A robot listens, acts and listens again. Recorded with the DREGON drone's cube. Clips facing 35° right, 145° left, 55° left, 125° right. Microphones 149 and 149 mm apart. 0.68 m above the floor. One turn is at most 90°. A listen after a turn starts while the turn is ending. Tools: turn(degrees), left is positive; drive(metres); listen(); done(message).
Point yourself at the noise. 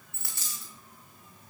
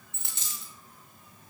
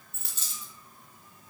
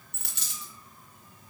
turn(degrees=-90)
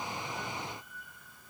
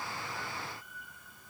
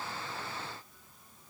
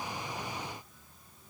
turn(degrees=-55)
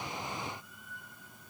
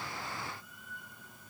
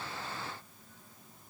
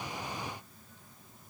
done("Facing where the dropped coin came from. I can't hear it now.")